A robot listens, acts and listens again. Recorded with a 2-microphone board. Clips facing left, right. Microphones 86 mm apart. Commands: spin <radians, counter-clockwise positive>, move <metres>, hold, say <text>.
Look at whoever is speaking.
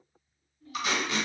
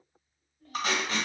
spin -1.05
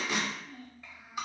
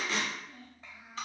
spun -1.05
spin -0.44
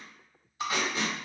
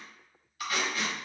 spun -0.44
hold
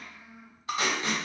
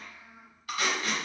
spin -0.26
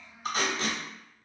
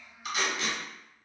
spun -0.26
say Facing the child speaking, 1 to 2 m away.